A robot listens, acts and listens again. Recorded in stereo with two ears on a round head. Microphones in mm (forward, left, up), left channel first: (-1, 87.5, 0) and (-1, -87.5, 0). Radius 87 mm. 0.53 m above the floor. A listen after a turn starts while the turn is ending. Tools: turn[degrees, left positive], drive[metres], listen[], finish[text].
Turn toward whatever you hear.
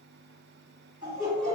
Thought: The laughter: about 20° right or 160° right.
Action: turn[-20]
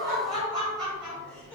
Action: finish[Facing the laughter.]